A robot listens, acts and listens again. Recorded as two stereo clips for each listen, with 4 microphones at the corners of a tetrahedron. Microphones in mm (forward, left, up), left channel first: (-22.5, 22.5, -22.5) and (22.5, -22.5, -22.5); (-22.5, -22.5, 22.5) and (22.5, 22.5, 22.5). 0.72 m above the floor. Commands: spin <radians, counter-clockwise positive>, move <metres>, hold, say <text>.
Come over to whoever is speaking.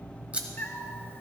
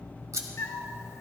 hold
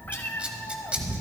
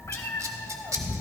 hold
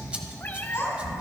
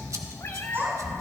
spin 1.57
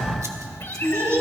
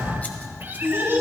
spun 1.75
move 1.0
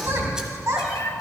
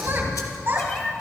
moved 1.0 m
spin -0.17
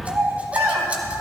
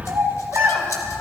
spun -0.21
move 1.0
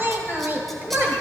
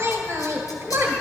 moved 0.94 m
move 1.0
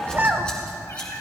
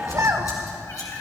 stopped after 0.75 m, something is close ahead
spin 0.17
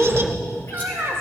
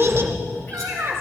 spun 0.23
say I am next to the child speaking.